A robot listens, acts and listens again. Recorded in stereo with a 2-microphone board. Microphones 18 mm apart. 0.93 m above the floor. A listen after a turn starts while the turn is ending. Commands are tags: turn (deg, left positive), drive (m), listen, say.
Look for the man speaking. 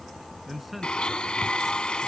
<turn deg="-30"/>
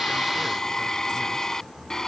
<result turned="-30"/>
<listen/>
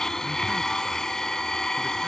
<listen/>
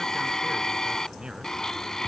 <say>I heard a man speaking, but can't make it out now. It was about 25° left or 145° right.</say>